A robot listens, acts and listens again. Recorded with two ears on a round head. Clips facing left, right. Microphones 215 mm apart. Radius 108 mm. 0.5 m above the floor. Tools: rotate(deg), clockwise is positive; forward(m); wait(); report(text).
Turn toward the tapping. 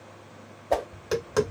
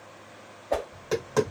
rotate(-20)
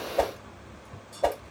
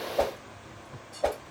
rotate(-140)
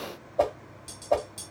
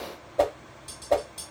rotate(-15)
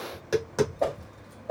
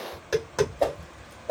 report("Found it: tapping, straight ahead.")